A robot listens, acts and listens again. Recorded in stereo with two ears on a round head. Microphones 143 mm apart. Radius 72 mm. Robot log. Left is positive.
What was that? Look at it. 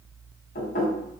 note: The knocking: about 60° left or 120° left.
cmd yaw +60
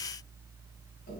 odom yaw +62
cmd idle
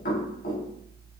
note: So it is at 60° left.
cmd yaw +60
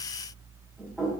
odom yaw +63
end: Facing the knocking.